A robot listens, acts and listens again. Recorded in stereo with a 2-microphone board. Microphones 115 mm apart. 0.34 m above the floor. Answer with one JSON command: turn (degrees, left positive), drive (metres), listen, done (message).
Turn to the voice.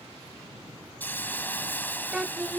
{"turn": -30}
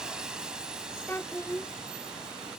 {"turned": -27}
{"turn": 20}
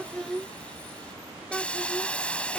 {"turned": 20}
{"done": "Facing the child speaking."}